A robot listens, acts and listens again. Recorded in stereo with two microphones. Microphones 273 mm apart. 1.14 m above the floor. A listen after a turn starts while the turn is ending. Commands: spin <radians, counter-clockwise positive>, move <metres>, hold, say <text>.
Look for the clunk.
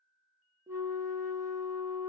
hold
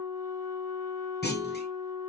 spin 0.61
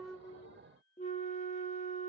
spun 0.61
hold
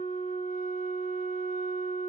say I heard a clunk, but can't make it out now. It was about straight ahead or 110° left.